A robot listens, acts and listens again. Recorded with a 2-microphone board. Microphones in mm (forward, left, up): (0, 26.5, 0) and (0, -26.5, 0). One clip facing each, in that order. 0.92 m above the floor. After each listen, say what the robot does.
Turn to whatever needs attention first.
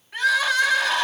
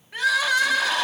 Turn 30° right.
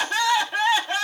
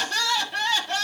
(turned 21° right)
Turn 15° left.
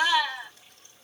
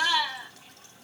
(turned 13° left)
Found it: crying, straight ahead, 1 to 2 m away.